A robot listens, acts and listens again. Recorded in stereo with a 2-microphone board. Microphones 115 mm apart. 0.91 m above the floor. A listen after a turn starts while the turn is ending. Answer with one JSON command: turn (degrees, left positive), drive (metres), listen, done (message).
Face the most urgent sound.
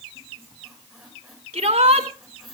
{"turn": -90}
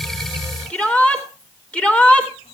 {"turn": 10}
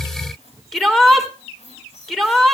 {"done": "Found it: a shout, straight ahead."}